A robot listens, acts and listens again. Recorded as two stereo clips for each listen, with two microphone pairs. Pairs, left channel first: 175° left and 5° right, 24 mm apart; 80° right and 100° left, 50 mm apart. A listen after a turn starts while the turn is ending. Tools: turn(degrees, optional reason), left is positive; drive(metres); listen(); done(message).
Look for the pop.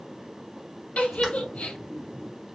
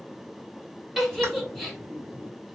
turn(degrees=65, reason="The pop: 65° left.")
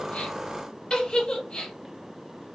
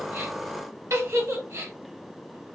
done("Facing where the pop came from. I can't hear it now.")